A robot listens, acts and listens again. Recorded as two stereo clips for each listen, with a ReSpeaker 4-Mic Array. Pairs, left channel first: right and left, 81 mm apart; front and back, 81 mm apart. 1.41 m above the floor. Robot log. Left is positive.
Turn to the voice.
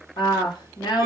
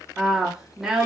note: The woman speaking: 95° right.
cmd yaw -95
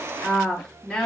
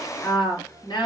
end: Facing the woman speaking.